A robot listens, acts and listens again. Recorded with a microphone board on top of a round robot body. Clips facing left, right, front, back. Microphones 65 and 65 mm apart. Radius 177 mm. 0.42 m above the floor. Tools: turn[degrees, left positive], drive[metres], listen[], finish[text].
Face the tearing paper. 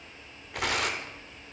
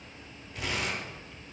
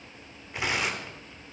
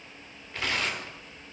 Thought: The tearing paper: 70° left.
Action: turn[70]
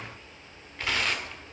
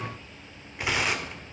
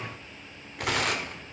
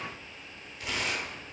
Thought: The tearing paper is now 15° right.
Action: turn[-15]
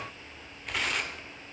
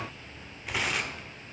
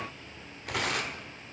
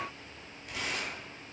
Action: finish[Found it: tearing paper, straight ahead, 1 to 2 m away.]